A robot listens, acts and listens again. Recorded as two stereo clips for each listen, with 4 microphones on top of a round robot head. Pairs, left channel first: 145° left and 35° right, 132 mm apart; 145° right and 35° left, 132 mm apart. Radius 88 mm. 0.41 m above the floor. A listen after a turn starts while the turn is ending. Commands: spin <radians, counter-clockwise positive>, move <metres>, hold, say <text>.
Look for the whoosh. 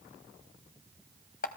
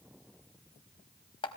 hold
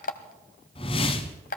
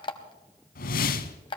spin -2.88
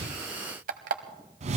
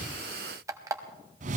say Facing the whoosh.